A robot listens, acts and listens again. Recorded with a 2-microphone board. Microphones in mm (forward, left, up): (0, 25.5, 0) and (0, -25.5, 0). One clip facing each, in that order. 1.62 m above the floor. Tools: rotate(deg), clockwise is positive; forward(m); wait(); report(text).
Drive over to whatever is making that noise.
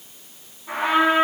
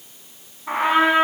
rotate(50)
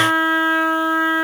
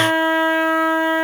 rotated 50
rotate(85)
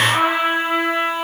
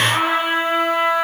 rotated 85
rotate(-10)
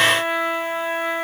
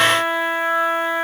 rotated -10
forward(1.0)
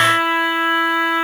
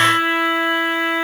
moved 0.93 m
rotate(-10)
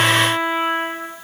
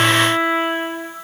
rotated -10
forward(1.0)
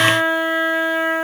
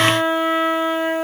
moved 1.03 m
forward(1.0)
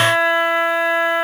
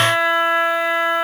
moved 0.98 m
forward(1.0)
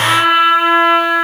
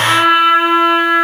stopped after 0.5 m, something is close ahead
report("I am next to the trumpet.")